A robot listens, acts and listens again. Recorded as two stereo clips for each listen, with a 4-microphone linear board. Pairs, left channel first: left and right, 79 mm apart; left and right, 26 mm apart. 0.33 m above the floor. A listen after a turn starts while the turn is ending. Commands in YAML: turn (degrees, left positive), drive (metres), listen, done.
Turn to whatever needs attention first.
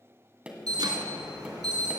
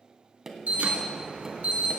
turn: -65
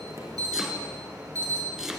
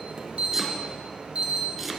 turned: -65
turn: -45
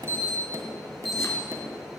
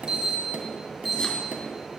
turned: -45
done: "Found it: an alarm, straight ahead."